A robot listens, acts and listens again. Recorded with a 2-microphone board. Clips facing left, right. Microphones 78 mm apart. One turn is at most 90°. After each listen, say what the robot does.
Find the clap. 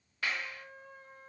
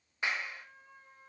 Turn 20° right.
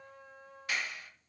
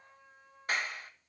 Turn 90° right.
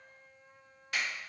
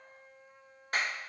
Turn 40° right.
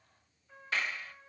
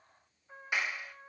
Turn 15° right.
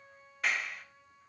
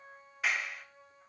Facing the clap.